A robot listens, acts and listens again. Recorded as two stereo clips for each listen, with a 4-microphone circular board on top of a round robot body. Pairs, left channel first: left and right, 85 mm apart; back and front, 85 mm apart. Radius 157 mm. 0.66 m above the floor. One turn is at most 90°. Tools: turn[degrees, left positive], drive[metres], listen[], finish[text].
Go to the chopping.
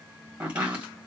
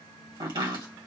Thought: The chopping: 15° right.
Action: turn[-15]
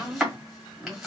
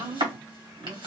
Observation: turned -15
Action: drive[1.0]
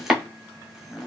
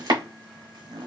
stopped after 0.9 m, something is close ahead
Action: finish[I am next to the chopping.]